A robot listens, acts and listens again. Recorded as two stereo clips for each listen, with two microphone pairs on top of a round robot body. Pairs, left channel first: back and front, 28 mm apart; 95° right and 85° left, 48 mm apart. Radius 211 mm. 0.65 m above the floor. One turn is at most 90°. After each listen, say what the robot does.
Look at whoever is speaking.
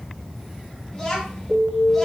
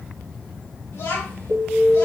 Turn 90° right.
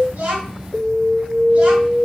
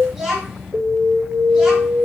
Found it: a child speaking, straight ahead.